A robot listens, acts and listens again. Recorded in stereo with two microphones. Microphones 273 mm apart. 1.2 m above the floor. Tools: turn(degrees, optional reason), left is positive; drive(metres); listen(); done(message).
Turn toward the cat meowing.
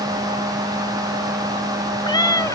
turn(degrees=30)
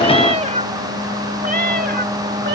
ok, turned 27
turn(degrees=-40, reason="So it is at 40° right.")
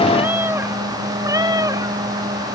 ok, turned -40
turn(degrees=-15, reason="The cat meowing is now 15° right.")
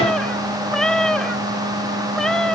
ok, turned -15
done("Found it: a cat meowing, straight ahead.")